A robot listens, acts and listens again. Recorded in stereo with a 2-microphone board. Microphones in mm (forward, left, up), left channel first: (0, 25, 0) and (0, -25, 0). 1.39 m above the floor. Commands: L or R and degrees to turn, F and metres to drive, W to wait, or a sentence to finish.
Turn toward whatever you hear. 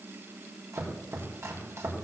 R65
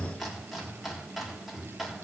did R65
Facing the chopping, 2 to 4 m away.